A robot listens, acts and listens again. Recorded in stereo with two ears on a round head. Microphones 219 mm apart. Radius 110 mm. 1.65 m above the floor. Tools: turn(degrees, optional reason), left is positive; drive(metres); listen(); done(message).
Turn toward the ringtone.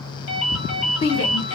turn(degrees=60, reason="The ringtone: about 60° left or 120° left.")
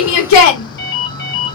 turn(degrees=45, reason="So it is at 45° left.")
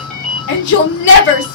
done("Found it: a ringtone, straight ahead, 1 to 2 m away.")